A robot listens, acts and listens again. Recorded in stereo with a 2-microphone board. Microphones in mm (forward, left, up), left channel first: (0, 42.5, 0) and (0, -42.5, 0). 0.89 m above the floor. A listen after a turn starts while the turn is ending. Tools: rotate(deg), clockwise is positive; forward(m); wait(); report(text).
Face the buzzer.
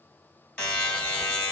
rotate(-30)
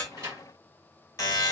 rotate(-140)
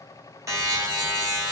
rotate(40)
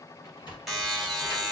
report("Found it: a buzzer, straight ahead, 1 to 2 m away.")